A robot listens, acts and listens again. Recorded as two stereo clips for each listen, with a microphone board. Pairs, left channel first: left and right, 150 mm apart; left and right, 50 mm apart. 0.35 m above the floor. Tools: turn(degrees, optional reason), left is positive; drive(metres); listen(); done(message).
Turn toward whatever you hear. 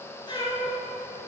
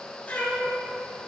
turn(degrees=35, reason="The cat meowing: about 35° left or 145° left.")
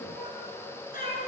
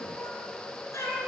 turn(degrees=100, reason="So it is at 100° left.")
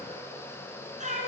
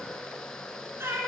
turn(degrees=-60, reason="The cat meowing is now 60° right.")
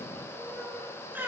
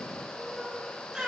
turn(degrees=-15, reason="The cat meowing is now 15° right.")
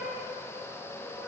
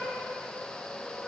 listen()
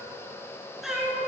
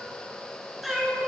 done("Found it: a cat meowing, straight ahead.")